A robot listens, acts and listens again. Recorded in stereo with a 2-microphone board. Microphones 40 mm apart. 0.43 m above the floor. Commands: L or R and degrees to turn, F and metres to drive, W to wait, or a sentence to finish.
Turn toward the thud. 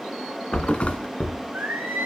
L30
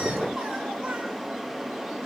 W
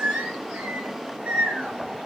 I heard a thud, but can't make it out now. It was about straight ahead or 120° left.